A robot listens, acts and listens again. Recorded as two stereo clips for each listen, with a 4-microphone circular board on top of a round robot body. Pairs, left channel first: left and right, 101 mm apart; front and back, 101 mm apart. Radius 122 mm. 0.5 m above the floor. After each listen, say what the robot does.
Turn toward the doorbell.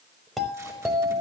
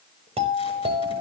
Turn 180° left.
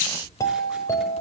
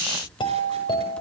Turn 35° left.
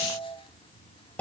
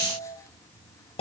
Turn 15° left.
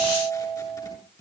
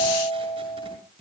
Facing the doorbell, over 4 m away.